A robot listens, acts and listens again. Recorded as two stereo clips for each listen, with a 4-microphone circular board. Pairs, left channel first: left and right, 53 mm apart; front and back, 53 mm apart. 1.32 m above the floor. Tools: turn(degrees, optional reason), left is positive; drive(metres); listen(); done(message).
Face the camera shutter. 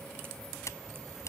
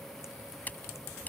turn(degrees=60, reason="The camera shutter: 60° left.")
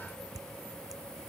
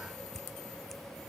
turn(degrees=10, reason="The camera shutter is now 10° left.")
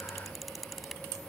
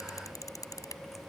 done("Found it: a camera shutter, straight ahead.")